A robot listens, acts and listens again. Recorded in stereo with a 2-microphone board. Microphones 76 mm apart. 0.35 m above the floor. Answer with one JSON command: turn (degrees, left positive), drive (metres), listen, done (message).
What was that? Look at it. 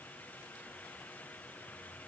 {"listen": true}
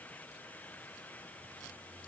{"listen": true}
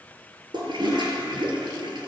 {"turn": -90}
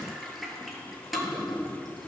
{"done": "Found it: a toilet flushing, straight ahead, 1 to 2 m away."}